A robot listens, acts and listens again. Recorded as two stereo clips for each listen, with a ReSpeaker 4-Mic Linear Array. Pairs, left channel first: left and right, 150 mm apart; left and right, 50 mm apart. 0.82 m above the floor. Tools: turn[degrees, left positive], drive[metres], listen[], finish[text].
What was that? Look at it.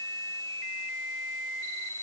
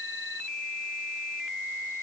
Action: listen[]
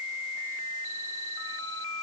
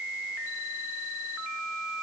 Action: listen[]
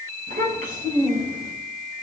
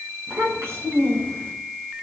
Thought: The child speaking: about 65° right or 115° right.
Action: turn[-65]
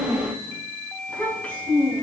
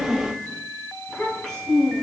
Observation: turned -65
Thought: So it is at 10° left.
Action: turn[10]
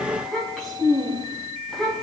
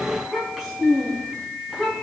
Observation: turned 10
Action: finish[Found it: a child speaking, straight ahead, over 4 m away.]